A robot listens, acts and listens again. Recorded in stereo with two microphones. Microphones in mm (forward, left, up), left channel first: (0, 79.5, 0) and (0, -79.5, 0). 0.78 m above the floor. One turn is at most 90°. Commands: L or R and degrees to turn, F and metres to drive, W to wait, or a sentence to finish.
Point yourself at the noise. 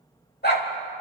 L75
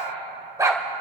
R20
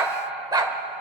R25
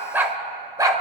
R25
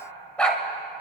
Facing the dog barking.